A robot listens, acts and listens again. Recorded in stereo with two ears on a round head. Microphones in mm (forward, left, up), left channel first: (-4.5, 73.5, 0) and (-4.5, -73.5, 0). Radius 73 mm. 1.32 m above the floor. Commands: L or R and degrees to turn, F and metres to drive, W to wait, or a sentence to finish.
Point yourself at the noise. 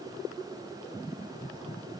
W
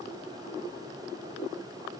W
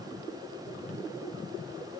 I can't make out anything.